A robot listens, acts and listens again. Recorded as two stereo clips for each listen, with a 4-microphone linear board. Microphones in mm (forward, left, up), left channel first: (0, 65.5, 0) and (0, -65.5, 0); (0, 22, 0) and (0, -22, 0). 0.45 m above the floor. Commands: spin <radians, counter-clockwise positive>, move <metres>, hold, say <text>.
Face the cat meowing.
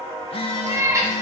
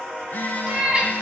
spin -0.44
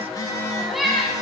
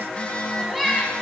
say Found it: a cat meowing, straight ahead, 1 to 2 m away.